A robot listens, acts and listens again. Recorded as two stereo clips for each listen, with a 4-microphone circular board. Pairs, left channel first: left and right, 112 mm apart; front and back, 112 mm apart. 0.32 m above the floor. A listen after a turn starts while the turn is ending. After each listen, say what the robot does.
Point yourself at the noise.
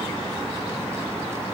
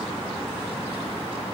Keep listening.
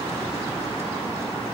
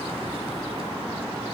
Keep listening.
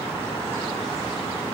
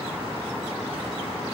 I can't make out anything.